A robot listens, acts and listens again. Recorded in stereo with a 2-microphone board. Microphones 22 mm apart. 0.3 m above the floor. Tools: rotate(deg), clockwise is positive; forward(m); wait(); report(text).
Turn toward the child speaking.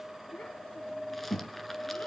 rotate(-70)
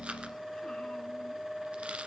wait()
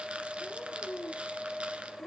rotate(-45)
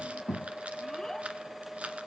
rotate(-15)
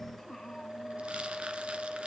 report("Facing the child speaking.")